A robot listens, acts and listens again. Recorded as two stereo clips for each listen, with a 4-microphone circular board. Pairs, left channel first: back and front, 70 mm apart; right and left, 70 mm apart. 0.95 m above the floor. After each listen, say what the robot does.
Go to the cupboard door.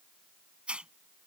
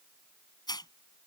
Keep listening.
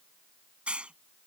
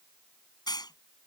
Keep listening.
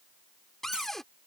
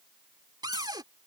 Turn 95° left.
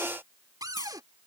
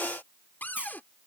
Turn 25° right.
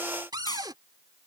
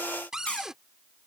Turn 10° left.
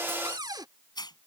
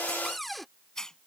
Drive 1.0 m forward.
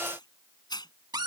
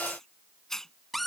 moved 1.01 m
Drive 1.0 m forward.
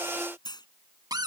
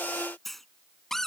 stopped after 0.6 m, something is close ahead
Arrived at the cupboard door, straight ahead.